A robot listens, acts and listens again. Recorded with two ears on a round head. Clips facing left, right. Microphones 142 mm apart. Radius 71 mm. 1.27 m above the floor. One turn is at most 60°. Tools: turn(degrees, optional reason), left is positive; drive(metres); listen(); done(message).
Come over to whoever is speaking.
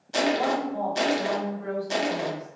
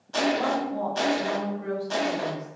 turn(degrees=-25, reason="The woman speaking: about 25° right or 155° right.")
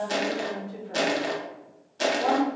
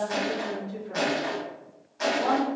drive(metres=1.0)
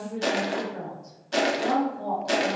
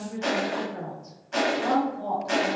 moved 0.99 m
drive(metres=1.0)
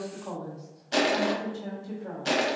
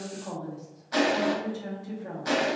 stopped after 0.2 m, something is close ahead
done("I am next to the woman speaking.")